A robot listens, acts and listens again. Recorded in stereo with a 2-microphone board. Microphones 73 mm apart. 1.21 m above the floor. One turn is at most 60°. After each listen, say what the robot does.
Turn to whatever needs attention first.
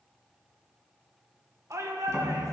Turn 45° right.
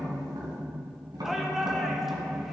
Facing the shout, 1 to 2 m away.